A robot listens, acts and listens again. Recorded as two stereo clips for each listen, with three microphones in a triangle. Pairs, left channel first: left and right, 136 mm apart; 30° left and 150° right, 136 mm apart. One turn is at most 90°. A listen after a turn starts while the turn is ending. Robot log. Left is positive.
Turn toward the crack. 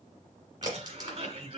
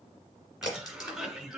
note: The crack: 30° right.
cmd yaw -30
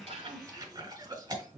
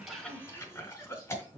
end: I heard a crack from this way, but can't make it out now.